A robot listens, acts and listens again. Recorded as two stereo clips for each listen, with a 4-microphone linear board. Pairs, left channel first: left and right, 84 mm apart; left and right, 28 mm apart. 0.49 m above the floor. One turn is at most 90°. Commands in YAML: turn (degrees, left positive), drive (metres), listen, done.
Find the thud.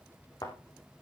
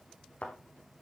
turn: 50
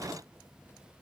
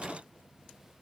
listen: true
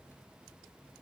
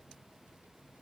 done: "I heard a thud, but can't make it out now. It was about straight ahead or 80° left."